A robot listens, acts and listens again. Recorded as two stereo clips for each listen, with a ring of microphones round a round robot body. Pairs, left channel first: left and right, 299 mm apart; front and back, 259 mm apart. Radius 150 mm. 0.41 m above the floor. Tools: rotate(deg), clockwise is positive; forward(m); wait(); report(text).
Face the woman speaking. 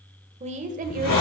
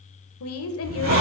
rotate(35)
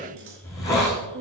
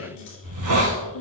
rotate(40)
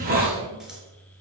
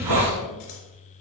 wait()
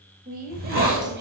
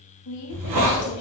rotate(30)
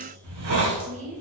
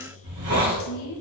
rotate(25)
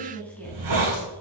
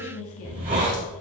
report("Found it: a woman speaking, straight ahead, 2 to 4 m away.")